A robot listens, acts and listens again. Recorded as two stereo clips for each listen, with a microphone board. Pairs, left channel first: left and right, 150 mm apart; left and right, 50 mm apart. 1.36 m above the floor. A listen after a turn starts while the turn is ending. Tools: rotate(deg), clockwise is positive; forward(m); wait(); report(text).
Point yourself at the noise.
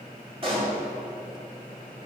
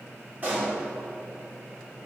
rotate(35)
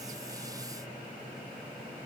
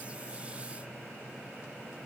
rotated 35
wait()
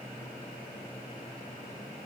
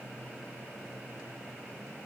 report("I heard a pop, but can't make it out now. It was about straight ahead or 110° right.")